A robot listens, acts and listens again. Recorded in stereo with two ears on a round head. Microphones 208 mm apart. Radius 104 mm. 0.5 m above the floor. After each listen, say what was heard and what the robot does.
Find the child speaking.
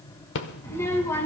Turn 30° left.
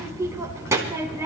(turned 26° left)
So it is at 15° right. Turn 15° right.
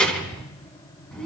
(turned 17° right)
Facing the child speaking, 2 to 4 m away.